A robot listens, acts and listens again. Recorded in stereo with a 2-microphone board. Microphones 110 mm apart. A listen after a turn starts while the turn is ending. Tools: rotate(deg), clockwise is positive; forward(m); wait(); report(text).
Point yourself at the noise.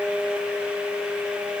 wait()
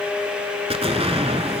rotate(65)
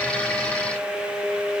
wait()
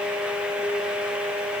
report("I heard an explosion, but can't make it out now. It was about straight ahead or 50° right.")